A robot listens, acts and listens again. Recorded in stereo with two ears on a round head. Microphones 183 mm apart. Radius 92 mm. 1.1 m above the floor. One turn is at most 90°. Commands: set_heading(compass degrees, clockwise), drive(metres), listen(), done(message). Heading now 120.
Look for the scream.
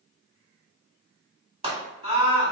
set_heading(150)
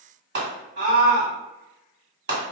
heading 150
set_heading(240)
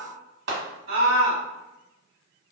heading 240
set_heading(295)
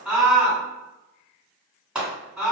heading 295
done("Found it: a scream, straight ahead.")